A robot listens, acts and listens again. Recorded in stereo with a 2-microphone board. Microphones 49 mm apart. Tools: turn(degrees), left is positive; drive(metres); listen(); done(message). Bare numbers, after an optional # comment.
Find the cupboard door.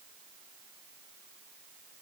listen()
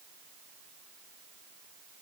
listen()
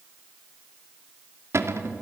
# The cupboard door: about 65° right or 115° right.
turn(-65)
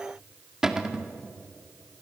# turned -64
# So it is at 15° right.
turn(-15)
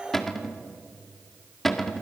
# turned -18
done("Facing the cupboard door, 1 to 2 m away.")